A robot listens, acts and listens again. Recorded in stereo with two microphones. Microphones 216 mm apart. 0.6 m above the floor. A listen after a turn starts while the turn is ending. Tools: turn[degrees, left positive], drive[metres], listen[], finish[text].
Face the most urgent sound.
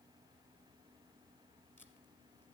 Action: listen[]
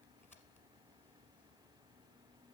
Action: listen[]
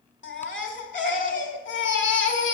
Thought: The baby crying: about 60° left or 120° left.
Action: turn[60]
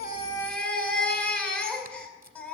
Action: finish[Found it: a baby crying, straight ahead.]